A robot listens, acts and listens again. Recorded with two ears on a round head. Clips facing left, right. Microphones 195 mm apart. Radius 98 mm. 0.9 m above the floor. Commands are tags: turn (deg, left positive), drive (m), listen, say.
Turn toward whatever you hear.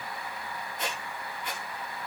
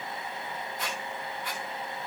<turn deg="20"/>
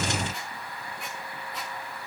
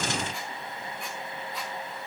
<listen/>
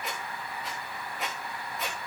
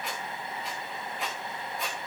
<say>Found it: a squeak, straight ahead, 2 to 4 m away.</say>